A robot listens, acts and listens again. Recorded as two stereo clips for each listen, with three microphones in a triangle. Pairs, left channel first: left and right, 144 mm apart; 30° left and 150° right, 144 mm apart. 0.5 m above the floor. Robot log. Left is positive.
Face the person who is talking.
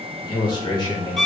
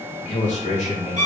note: The man speaking: 40° left.
cmd yaw +40
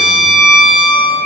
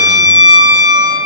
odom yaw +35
cmd idle
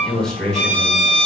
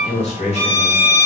end: Found it: a man speaking, straight ahead.